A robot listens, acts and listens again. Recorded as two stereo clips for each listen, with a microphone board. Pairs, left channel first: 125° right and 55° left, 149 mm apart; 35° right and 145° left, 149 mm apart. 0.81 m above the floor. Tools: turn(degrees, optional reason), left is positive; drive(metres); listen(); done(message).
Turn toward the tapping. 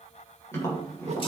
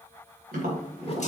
turn(degrees=165, reason="The tapping: 165° left.")
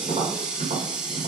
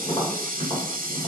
turn(degrees=15, reason="The tapping is now 15° left.")
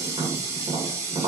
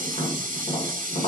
done("Facing the tapping.")